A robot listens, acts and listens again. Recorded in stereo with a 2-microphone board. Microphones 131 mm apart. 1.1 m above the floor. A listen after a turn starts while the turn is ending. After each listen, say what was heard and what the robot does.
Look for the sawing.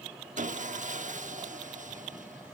The sawing: about 70° right or 110° right. Turn 70° right.
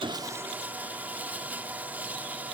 So it is at 10° right. Turn 10° right.
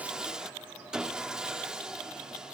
Found it: sawing, straight ahead, 1 to 2 m away.